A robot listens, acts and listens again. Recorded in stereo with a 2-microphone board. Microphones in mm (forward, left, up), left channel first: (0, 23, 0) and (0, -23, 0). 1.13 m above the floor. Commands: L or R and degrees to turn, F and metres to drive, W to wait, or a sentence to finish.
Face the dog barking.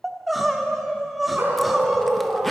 R60
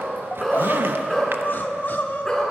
L10
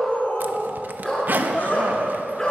L10
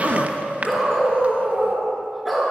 Found it: a dog barking, straight ahead, over 4 m away.